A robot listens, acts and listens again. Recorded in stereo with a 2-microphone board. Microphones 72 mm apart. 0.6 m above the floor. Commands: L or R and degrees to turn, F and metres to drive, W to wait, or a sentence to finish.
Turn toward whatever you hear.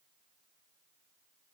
W
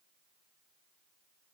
W
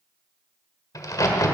L55
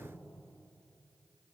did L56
W
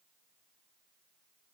I heard a crack, but can't make it out now. It was about 5° right or 70° left.